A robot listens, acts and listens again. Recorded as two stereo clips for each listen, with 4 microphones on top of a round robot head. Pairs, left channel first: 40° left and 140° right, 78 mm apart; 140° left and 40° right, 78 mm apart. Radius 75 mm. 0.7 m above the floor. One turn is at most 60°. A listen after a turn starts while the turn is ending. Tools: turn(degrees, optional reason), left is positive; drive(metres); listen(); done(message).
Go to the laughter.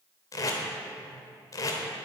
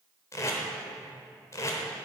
listen()
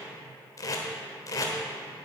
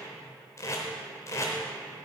listen()
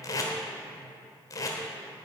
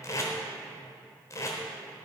done("I can't make out laughter, only tape being pulled.")